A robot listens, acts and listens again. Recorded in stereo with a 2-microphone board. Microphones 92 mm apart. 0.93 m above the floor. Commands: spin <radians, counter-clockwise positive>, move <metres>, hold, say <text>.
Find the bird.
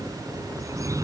spin -0.61
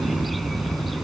say Found it: a bird, straight ahead.